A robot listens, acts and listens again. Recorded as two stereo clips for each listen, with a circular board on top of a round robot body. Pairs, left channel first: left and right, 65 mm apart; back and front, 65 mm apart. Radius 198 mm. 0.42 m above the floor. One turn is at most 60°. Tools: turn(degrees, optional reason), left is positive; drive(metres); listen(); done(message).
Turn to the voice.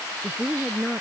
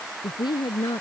turn(degrees=60, reason="The woman speaking: straight behind.")
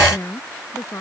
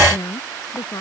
turn(degrees=60, reason="The woman speaking is now 140° left.")
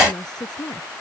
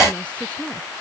turn(degrees=60, reason="The woman speaking is now 105° left.")
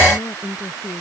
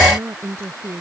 turn(degrees=50, reason="The woman speaking is now 50° left.")
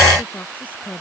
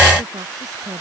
listen()
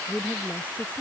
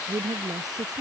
turn(degrees=25, reason="The woman speaking is now 25° left.")
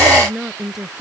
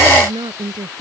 done("Found it: a woman speaking, straight ahead.")